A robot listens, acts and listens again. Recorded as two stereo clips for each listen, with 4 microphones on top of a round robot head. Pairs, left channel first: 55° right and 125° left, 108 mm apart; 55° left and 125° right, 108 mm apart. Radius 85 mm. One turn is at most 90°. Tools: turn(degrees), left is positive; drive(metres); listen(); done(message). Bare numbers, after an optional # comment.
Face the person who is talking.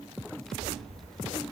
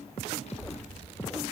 # The child speaking: 30° left.
turn(30)
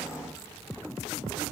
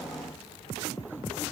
done("Facing the child speaking, 1 to 2 m away.")